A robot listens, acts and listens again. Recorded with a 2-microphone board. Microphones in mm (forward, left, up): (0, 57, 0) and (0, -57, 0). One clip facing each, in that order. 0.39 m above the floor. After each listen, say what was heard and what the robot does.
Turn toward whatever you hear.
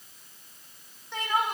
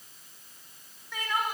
The crying: about 25° left or 155° left. Turn 25° left.
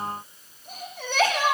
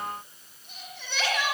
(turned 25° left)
So it is at 135° left. Turn 135° left.
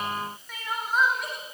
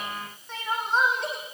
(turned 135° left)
The crying is now 25° right. Turn 25° right.
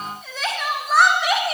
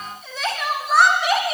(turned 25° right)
Found it: crying, straight ahead, over 4 m away.